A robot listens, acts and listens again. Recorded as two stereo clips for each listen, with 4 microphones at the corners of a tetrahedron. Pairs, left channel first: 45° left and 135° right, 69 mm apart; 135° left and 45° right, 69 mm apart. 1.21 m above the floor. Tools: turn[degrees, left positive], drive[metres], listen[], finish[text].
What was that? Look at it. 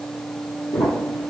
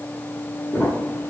Thought: The crumpling: 65° left.
Action: turn[65]
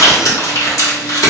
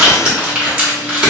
Thought: The crumpling is now 25° left.
Action: turn[25]
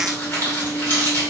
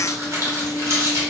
Thought: The crumpling is now 10° right.
Action: turn[-10]
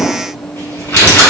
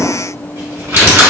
Action: finish[Facing the crumpling.]